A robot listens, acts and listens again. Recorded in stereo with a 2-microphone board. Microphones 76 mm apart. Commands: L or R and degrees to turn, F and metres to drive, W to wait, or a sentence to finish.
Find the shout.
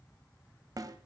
W
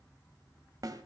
W
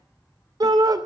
R60
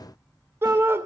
R40
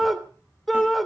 Facing the shout, 2 to 4 m away.